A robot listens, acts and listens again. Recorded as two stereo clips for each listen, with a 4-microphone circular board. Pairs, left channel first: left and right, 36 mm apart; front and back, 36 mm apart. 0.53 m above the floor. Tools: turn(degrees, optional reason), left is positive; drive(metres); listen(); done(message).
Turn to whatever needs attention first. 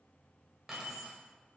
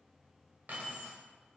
listen()
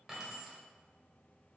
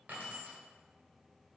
listen()
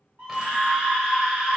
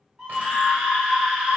turn(degrees=-95, reason="The scream: 95° right.")
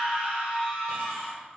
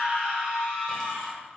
turn(degrees=-10, reason="The scream is now 10° right.")
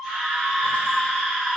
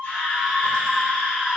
done("Facing the scream.")